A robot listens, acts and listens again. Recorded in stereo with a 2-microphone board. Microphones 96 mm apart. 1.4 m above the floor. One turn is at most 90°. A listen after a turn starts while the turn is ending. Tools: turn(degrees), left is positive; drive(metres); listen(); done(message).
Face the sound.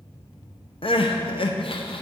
turn(degrees=65)
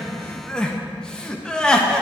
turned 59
turn(degrees=10)
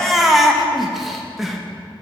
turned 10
done("Facing the crying.")